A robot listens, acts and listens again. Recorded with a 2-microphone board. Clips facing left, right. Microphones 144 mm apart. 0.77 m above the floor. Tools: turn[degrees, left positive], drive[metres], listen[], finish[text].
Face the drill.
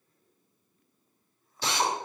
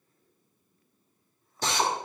Thought: The drill: about 45° right or 135° right.
Action: turn[-45]
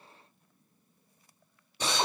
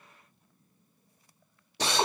Thought: So it is at 90° right.
Action: turn[-90]
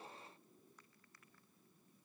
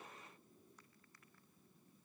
Action: listen[]
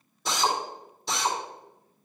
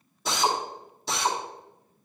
Action: finish[Facing the drill.]